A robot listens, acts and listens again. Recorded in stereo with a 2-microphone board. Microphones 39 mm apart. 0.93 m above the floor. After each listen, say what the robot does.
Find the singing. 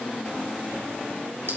Keep listening.
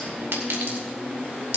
Keep listening.
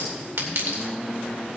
I can't make out singing to turn to.